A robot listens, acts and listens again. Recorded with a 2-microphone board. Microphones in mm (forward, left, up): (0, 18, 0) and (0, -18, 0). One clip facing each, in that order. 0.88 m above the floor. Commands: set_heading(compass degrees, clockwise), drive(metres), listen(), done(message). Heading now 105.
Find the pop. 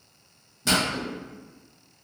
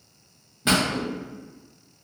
set_heading(130)
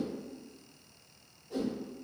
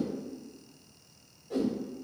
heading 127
listen()
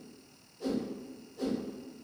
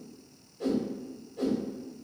done("I heard a pop, but can't make it out now. It was about 5° right or 135° right.")